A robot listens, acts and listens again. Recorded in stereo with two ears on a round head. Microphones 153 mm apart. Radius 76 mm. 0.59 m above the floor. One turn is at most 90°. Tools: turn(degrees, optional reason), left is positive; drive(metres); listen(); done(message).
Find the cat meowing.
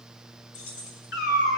turn(degrees=60, reason="The cat meowing: about 60° left or 120° left.")
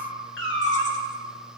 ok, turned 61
turn(degrees=80, reason="So it is at 80° left.")
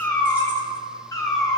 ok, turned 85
turn(degrees=25, reason="The cat meowing is now 25° left.")
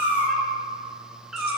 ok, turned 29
done("Facing the cat meowing.")